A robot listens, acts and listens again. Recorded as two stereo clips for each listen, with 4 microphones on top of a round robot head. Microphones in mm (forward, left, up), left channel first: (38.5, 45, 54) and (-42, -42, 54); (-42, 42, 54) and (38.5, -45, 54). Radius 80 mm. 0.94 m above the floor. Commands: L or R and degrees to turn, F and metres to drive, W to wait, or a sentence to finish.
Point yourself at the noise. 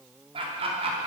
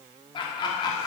R170
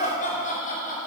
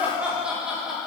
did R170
L40
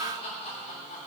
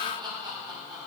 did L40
L10
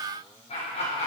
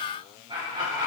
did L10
L10
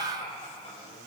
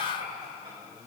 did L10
Facing the laughter.